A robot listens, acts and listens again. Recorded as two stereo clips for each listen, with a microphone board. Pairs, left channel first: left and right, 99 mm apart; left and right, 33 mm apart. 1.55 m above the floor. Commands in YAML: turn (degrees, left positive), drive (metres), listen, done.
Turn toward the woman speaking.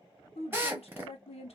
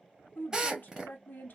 turn: 90
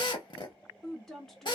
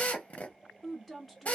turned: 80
done: "Found it: a woman speaking, straight ahead, under 1 m away."